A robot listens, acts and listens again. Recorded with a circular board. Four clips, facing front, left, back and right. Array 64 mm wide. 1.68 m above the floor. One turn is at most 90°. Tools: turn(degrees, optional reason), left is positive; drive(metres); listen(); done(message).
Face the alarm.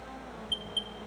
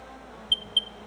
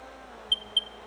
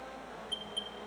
turn(degrees=90, reason="The alarm: 120° left.")
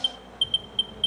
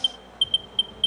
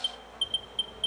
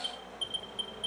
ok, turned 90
turn(degrees=65, reason="The alarm is now 65° left.")
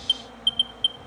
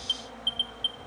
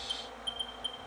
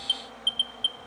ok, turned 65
turn(degrees=-10, reason="The alarm is now 10° right.")
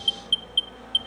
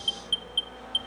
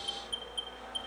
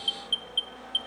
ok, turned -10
done("Found it: an alarm, straight ahead.")